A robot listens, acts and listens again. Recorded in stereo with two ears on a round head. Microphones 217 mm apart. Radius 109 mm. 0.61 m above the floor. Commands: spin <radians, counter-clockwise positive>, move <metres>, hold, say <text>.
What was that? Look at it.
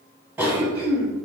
spin -0.52
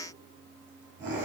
spin -2.44
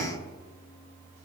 spin -0.61
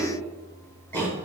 spin 0.17
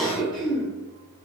say Found it: a cough, straight ahead.